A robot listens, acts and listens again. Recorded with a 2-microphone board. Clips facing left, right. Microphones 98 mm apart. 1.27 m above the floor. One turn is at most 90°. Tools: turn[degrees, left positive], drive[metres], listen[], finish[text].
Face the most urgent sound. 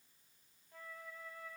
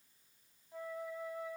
Action: listen[]
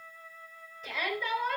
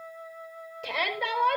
Thought: The shout: about 70° right or 110° right.
Action: turn[-70]
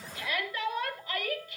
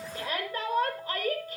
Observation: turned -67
Thought: So it is at 40° right.
Action: turn[-40]
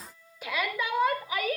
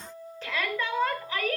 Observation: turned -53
Thought: The shout is now 10° left.
Action: turn[10]
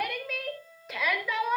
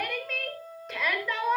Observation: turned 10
Action: finish[Found it: a shout, straight ahead.]